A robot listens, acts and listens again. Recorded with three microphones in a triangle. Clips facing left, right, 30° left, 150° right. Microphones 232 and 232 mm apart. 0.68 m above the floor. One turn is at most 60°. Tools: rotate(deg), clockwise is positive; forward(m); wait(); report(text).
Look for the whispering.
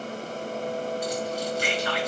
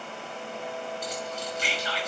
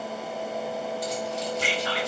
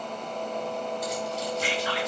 rotate(-50)
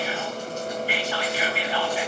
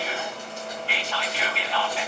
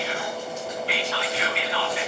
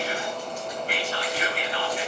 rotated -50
rotate(-10)
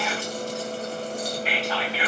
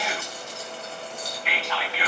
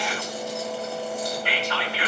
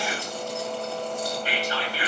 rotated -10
report("Facing the whispering.")